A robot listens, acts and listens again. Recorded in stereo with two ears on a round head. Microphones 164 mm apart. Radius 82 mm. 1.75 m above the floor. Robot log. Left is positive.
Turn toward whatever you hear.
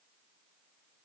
cmd idle
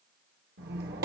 note: The squeak: about 60° right or 120° right.
cmd yaw -60
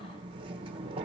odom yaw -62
note: So it is at 35° right.
cmd yaw -35
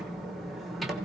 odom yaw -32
end: Facing the squeak, 1 to 2 m away.